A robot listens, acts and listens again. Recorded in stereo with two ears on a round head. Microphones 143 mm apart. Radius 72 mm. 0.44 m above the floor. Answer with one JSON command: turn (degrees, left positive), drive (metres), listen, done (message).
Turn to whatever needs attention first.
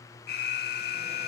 {"turn": 65}
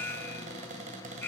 {"turn": 15}
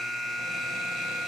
{"done": "Found it: an alarm, straight ahead."}